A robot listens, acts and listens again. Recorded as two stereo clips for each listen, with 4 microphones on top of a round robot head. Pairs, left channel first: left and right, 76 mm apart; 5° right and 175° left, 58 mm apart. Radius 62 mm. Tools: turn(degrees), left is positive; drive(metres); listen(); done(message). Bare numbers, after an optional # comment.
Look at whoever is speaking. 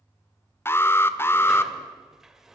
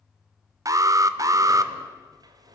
listen()
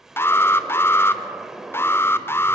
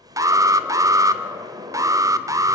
listen()
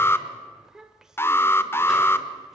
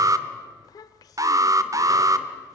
done("Found it: a child speaking, straight ahead, 1 to 2 m away.")